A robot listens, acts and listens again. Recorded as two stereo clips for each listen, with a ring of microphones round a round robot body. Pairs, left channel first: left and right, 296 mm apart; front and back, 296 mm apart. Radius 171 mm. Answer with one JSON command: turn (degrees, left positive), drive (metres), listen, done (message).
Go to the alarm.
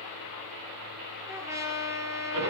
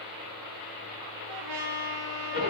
{"listen": true}
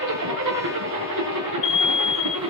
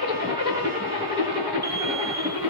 {"turn": 100}
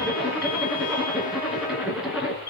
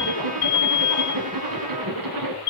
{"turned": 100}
{"turn": 30}
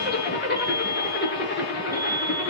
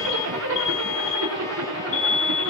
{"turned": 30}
{"turn": -10}
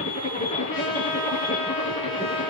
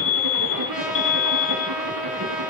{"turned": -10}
{"drive": 1.0}
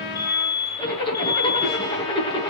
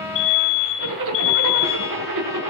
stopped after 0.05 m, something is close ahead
{"turn": 10}
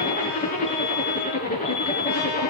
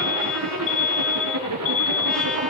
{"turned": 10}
{"done": "Blocked. The alarm is further on, straight ahead."}